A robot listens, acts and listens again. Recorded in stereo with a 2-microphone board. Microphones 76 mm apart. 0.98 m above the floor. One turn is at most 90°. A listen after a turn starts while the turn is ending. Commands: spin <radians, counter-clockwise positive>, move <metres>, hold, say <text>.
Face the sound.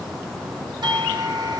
spin -1.05
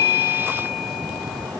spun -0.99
hold
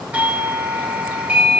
spin -0.35
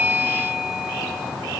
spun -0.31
say Found it: a doorbell, straight ahead.